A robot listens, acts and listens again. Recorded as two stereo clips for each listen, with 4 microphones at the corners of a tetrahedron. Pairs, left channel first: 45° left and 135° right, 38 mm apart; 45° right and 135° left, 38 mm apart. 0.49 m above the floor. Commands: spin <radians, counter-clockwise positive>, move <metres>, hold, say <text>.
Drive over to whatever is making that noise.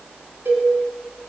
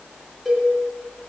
spin -2.27
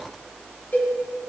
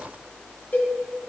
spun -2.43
spin 0.17
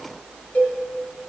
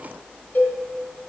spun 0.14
move 1.0
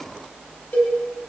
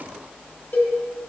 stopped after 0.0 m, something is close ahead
say Something is in my way. I am facing the cowbell but have not reached it.